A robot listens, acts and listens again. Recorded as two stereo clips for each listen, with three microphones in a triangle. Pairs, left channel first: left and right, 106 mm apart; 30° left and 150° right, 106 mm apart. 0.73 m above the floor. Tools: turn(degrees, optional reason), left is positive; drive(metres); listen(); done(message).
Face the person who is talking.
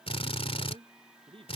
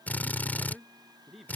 turn(degrees=-60, reason="The man speaking: 60° right.")
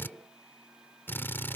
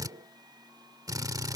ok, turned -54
turn(degrees=-10, reason="Nothing new. It was at 10° right.")
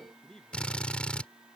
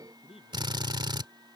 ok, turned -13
done("Facing the man speaking.")